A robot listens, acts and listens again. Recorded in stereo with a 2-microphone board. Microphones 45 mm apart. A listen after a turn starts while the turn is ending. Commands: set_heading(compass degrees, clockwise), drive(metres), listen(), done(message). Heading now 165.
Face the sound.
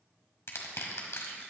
set_heading(75)
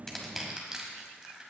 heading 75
set_heading(90)
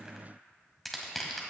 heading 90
done("Facing the crushing, 1 to 2 m away.")